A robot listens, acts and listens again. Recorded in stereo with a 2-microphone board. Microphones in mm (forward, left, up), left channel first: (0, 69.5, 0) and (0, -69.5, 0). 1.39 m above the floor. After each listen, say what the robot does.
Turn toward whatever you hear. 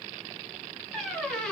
Turn 30° left.
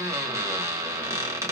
Turn 25° right.
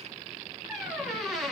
Found it: a squeak, straight ahead.